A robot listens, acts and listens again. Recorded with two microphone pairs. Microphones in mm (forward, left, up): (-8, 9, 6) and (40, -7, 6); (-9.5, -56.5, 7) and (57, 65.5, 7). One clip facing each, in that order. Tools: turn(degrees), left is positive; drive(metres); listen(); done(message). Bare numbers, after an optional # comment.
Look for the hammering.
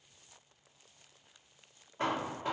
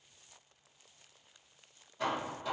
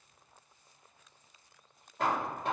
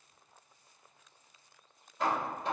# The hammering: 145° right.
turn(-145)
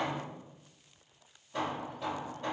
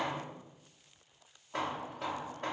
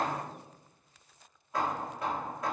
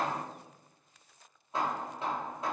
done("Facing the hammering.")